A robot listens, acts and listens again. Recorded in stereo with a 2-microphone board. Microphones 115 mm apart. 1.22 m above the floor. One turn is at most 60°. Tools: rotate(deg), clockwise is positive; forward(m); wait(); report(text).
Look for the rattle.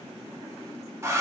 wait()
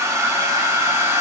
wait()
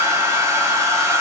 report("I can't make out a rattle to turn to.")